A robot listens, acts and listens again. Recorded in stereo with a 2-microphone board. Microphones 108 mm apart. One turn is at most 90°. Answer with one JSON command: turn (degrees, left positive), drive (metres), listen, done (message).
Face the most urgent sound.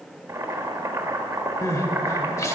{"turn": 30}
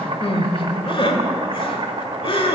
{"turn": 90}
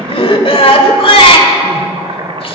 {"turn": 65}
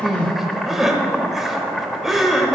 {"done": "Found it: crying, straight ahead."}